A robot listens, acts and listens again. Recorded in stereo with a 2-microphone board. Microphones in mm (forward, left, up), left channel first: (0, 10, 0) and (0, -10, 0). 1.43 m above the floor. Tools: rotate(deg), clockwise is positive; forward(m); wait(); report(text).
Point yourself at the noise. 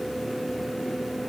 wait()
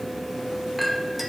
rotate(30)
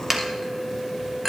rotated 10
rotate(15)
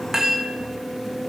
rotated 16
rotate(145)
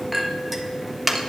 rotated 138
rotate(10)
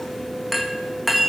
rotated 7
report("Facing the clink, 1 to 2 m away.")